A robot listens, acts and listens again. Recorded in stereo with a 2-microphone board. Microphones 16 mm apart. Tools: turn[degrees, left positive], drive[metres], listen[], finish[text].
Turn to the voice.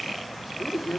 Action: turn[90]
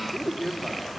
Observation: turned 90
Action: finish[Found it: a man speaking, straight ahead.]